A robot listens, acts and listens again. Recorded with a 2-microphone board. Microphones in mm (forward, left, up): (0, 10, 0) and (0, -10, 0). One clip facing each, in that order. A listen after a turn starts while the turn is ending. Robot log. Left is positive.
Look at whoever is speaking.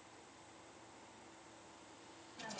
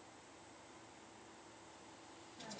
cmd idle
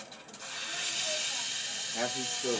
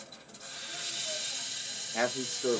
note: The man speaking: about 35° right or 145° right.
cmd yaw -35
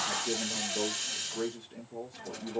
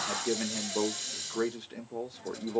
note: So it is at 110° right.
cmd yaw -110
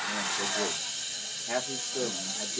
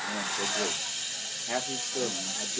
end: Facing the man speaking.